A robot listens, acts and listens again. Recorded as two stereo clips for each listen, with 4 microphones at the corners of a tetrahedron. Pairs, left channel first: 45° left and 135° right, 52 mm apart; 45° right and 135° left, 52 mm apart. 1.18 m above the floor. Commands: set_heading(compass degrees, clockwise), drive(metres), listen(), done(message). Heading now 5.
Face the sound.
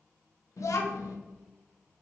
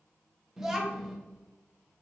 set_heading(310)
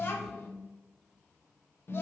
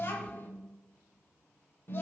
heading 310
done("Found it: a child speaking, straight ahead, under 1 m away.")